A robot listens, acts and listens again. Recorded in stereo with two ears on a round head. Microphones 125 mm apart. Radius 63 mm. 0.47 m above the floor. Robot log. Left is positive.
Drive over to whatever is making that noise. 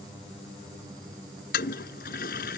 cmd yaw +90
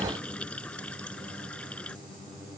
note: So it is at 10° left.
cmd yaw +10
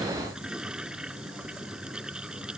cmd fwd 1.0
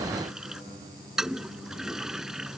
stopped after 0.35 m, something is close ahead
end: Blocked. The toilet flushing is further on, straight ahead.